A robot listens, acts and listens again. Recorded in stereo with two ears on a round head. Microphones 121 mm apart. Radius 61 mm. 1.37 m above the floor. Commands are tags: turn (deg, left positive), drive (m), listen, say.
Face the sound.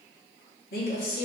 <turn deg="75"/>
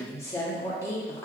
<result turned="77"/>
<turn deg="20"/>
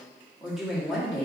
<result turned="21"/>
<say>Found it: a woman speaking, straight ahead.</say>